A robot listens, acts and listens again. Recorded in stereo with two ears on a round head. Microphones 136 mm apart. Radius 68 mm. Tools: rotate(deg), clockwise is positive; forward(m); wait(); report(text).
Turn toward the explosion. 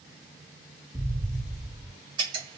rotate(-30)
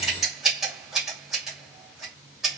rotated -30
wait()
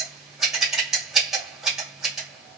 report("I heard an explosion, but can't make it out now. It was about 20° right or 140° left.")